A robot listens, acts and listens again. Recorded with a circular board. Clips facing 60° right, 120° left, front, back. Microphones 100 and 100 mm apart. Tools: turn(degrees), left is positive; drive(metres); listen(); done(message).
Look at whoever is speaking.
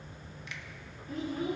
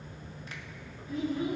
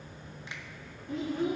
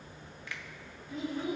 turn(degrees=-20)
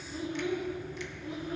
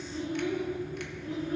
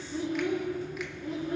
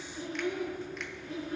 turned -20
turn(degrees=10)
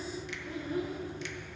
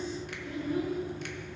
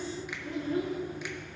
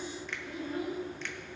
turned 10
done("Found it: a child speaking, straight ahead.")